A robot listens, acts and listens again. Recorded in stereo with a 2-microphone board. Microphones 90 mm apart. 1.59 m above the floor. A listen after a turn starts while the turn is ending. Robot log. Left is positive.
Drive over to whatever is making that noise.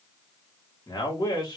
note: The man speaking: about 45° left or 135° left.
cmd yaw +45
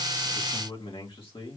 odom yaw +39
note: So it is at 95° left.
cmd yaw +95
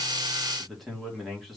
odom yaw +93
cmd fwd 1.0
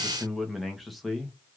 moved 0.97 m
cmd fwd 1.0
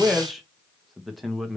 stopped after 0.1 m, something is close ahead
end: Arrived at the man speaking, straight ahead.